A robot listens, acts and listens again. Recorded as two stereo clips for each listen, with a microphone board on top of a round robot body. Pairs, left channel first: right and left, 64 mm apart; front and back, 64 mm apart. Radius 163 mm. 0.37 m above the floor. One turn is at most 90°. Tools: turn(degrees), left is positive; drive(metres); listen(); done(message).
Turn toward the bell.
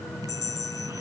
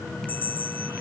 turn(degrees=-65)
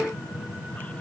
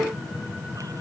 listen()
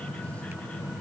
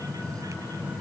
listen()
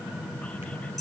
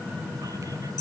done("Found it: a bell, straight ahead.")